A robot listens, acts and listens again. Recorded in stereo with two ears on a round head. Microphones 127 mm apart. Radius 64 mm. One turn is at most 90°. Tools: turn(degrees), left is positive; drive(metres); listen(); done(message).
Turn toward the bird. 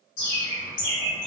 turn(degrees=65)
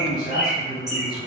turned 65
done("Found it: a bird, straight ahead.")